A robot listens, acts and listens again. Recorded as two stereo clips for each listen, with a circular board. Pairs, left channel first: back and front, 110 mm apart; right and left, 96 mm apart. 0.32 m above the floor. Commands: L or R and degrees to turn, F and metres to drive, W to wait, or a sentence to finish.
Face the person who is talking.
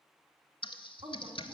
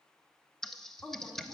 Facing the woman speaking.